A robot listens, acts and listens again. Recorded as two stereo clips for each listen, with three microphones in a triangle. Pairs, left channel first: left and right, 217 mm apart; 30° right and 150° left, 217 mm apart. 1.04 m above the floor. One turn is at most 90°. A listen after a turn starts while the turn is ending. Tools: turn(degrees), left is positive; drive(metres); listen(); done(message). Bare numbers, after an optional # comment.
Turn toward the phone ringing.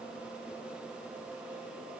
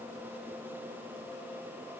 listen()
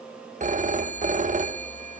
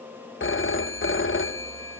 # The phone ringing: 35° right.
turn(-35)
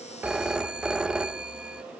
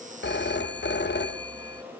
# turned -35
done("Facing the phone ringing, under 1 m away.")